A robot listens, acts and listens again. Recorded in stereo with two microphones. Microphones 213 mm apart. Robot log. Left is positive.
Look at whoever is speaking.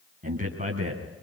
note: The man speaking: about 35° right or 145° right.
cmd yaw -35
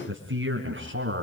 note: So it is at 125° right.
cmd yaw -125
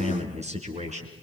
note: The man speaking is now 30° right.
cmd yaw -30
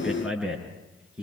end: Found it: a man speaking, straight ahead, over 4 m away.